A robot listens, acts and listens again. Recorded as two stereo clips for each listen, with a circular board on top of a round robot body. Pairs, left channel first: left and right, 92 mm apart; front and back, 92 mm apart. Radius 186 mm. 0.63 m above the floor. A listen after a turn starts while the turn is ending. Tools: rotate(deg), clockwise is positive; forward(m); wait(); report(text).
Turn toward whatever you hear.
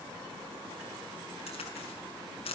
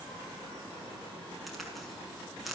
rotate(-90)
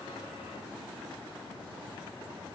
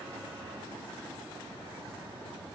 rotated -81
rotate(-10)
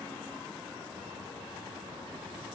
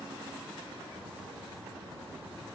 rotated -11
report("I heard a crack from this way, but can't make it out now.")